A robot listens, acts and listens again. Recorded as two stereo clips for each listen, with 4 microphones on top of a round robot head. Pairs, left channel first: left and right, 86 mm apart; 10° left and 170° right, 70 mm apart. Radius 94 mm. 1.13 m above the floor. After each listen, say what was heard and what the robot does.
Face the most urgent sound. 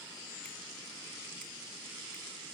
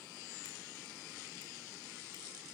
Keep listening.
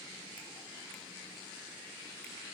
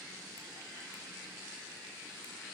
Keep listening.
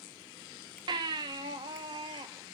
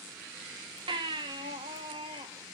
The baby crying: 140° right. Turn 140° right.
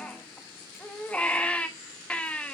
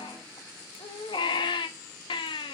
The baby crying is now 15° left. Turn 15° left.
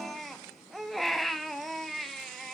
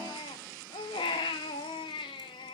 Facing the baby crying, under 1 m away.